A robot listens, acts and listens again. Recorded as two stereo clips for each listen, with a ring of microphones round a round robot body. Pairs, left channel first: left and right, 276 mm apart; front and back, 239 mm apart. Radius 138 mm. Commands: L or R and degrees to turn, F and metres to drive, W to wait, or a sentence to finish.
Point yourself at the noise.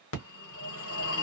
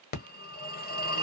L50
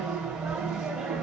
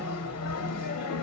Found it: a phone ringing, straight ahead.